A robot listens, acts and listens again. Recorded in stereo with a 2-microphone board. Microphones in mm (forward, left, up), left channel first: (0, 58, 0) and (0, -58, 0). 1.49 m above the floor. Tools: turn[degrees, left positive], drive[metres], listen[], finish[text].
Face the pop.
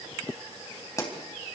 Thought: The pop: about 25° left or 155° left.
Action: turn[25]
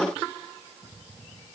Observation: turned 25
Action: listen[]
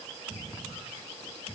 Action: finish[I heard a pop, but can't make it out now. It was about straight ahead or 130° left.]